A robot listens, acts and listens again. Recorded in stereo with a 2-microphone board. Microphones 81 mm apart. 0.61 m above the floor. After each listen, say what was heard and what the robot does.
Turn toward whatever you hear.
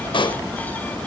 The pop: about 70° left or 110° left. Turn 70° left.
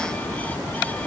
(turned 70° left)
Keep listening.
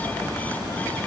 I heard a pop, but can't make it out now. It was about straight ahead or 40° left.